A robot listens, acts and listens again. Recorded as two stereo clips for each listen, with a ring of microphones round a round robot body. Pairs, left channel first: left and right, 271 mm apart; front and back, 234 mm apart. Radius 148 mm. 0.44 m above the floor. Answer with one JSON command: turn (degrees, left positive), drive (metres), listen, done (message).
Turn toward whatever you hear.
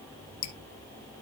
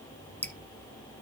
{"turn": 85}
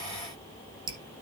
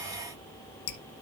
{"turn": -15}
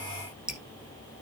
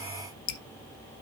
{"done": "Found it: dripping, straight ahead."}